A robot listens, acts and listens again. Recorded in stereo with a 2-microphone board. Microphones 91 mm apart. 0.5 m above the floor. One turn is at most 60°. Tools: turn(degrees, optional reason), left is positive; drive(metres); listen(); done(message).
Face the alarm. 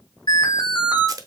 turn(degrees=60, reason="The alarm: about 60° left or 120° left.")
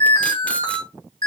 turn(degrees=60, reason="So it is at 60° left.")
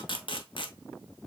listen()
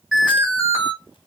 done("Found it: an alarm, straight ahead, 2 to 4 m away.")